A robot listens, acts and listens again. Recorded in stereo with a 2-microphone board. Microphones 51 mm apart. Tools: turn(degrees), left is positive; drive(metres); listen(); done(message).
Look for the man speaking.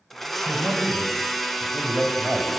turn(degrees=-15)
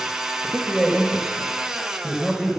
turn(degrees=30)
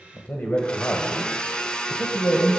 turn(degrees=130)
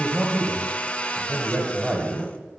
turn(degrees=-20)
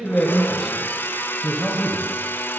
done("Found it: a man speaking, straight ahead.")